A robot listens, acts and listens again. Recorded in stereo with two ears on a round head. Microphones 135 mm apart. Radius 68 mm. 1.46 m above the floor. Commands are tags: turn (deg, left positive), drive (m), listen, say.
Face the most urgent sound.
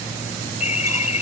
<turn deg="45"/>
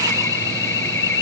<turn deg="90"/>
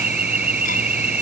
<turn deg="-10"/>
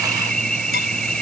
<say>Found it: an alarm, straight ahead.</say>